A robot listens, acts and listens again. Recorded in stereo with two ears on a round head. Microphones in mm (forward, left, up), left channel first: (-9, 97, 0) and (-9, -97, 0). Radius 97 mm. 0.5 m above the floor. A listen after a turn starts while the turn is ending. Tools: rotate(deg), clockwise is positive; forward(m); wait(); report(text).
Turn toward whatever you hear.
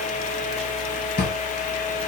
rotate(-45)
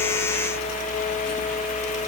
wait()
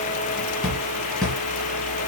report("Facing the drawer.")